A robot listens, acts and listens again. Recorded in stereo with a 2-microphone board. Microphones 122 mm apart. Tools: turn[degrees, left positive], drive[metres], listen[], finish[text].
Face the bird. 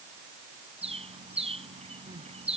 Thought: The bird: about 55° right or 125° right.
Action: turn[-55]
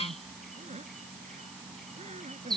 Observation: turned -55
Action: finish[Found it: a bird, straight ahead.]